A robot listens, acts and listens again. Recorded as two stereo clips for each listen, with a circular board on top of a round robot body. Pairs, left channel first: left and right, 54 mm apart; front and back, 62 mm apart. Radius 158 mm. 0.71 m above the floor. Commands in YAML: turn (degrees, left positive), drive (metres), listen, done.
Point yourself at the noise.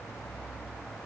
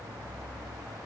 listen: true
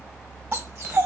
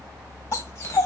turn: -50
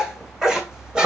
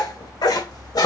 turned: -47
turn: -15
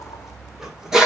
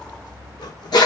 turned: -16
turn: -10
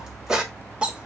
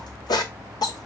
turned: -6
turn: -15
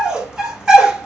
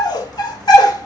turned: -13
turn: -15
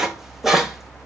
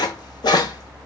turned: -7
done: "Found it: a dog barking, straight ahead."